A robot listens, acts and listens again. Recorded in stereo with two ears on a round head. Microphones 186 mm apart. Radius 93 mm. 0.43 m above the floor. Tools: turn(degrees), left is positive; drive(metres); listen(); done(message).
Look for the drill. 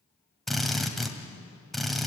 turn(degrees=30)
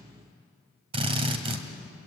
turn(degrees=-30)
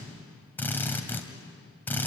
turn(degrees=10)
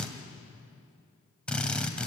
done("Found it: a drill, straight ahead, 2 to 4 m away.")